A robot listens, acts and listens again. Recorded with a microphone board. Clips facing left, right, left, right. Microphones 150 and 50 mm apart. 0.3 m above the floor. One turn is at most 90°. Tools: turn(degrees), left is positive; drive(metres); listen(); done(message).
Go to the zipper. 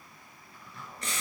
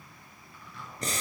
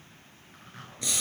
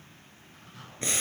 turn(degrees=45)
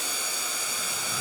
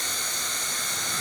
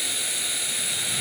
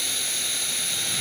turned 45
listen()
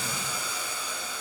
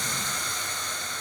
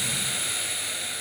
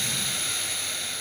listen()
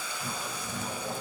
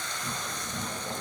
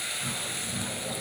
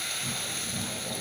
turn(degrees=85)
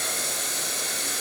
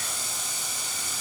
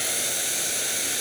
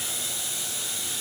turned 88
listen()
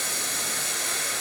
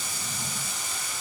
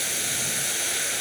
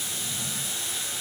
listen()
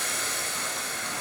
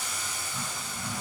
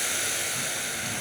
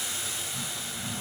done("I heard a zipper from this way, but can't make it out now. I did not reach it.")